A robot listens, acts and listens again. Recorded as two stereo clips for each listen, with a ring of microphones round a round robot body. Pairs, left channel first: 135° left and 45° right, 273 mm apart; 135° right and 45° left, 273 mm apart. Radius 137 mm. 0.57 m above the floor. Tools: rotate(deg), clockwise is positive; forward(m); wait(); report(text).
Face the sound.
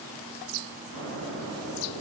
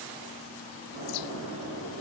report("Found it: an explosion, straight ahead, over 4 m away.")